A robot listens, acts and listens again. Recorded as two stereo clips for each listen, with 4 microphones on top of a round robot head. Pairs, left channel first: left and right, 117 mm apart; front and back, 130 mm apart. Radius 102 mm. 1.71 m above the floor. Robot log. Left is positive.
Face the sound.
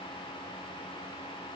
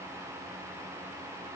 cmd idle
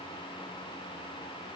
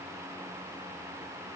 cmd idle
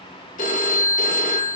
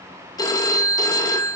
note: The phone ringing: 60° left.
cmd yaw +60
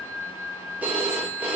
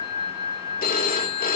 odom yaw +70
note: The phone ringing is now 10° right.
cmd yaw -10
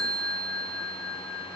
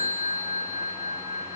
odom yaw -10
end: Facing the phone ringing, 2 to 4 m away.